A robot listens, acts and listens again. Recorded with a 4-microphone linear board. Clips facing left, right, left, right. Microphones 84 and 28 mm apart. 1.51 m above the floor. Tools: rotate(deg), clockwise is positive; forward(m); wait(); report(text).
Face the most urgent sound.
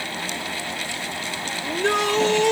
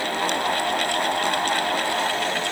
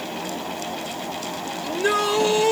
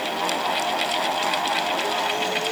rotate(-90)
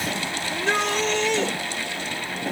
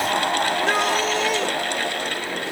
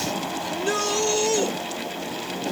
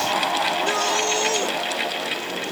report("Facing the shout.")